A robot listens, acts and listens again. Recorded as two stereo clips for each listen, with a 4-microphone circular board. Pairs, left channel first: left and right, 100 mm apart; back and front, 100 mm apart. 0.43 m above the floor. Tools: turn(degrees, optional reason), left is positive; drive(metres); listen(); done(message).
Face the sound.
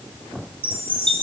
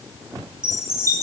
turn(degrees=-120, reason="The chime: 120° right.")
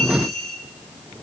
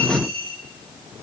done("Facing the chime.")